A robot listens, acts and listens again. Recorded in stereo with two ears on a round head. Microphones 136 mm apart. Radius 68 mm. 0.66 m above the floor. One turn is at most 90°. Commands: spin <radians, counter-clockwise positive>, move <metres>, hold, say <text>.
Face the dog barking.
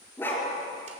spin 0.52
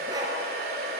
spin -0.44
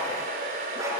hold
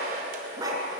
spin -0.44
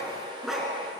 say Facing the dog barking, 2 to 4 m away.